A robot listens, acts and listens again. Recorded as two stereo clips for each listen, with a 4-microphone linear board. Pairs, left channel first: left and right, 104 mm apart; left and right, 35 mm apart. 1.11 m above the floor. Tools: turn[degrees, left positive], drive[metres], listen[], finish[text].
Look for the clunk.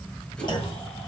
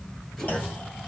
Thought: The clunk: about 45° left or 135° left.
Action: turn[45]
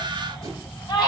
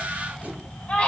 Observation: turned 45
Action: listen[]
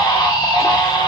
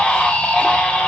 Action: finish[I heard a clunk, but can't make it out now. It was about straight ahead or 90° left.]